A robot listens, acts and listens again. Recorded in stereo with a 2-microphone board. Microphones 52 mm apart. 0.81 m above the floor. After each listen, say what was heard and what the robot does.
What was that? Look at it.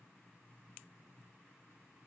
Keep listening.
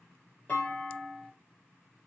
The clunk: about 30° left or 150° left. Turn 30° left.
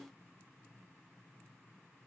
Keep listening.
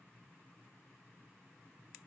I heard a clunk, but can't make it out now. It was about straight ahead or 120° left.